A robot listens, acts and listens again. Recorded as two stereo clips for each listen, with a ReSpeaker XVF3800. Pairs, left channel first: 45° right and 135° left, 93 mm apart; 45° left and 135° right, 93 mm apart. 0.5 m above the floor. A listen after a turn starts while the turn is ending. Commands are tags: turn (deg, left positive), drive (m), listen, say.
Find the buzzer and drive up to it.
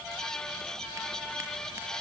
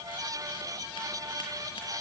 <listen/>
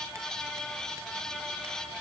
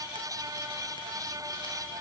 <listen/>
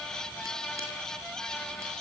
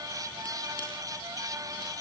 <say>I can't make out a buzzer to turn to.</say>